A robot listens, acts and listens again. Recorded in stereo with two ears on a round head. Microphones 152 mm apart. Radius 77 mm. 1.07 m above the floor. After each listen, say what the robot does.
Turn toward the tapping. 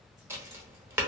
Turn 15° right.
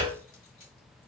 Turn 150° right.
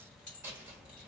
Keep listening.
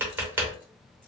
Turn 15° right.
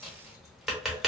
Found it: tapping, straight ahead.